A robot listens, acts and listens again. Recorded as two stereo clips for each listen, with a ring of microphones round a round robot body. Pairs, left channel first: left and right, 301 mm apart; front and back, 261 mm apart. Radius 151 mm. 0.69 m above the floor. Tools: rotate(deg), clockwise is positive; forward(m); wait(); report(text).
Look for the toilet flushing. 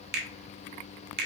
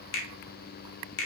wait()
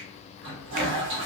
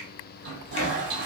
rotate(135)
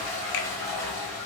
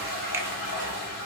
report("Found it: a toilet flushing, straight ahead.")